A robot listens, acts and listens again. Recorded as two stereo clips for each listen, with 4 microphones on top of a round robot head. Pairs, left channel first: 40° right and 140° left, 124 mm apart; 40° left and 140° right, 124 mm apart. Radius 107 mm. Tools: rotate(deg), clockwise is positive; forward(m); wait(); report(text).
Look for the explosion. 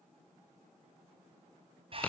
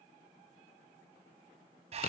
wait()
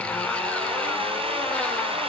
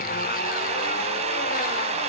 wait()
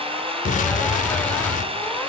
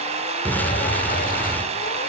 rotate(35)
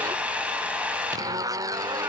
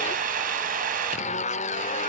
report("Facing where the explosion came from. I can't hear it now.")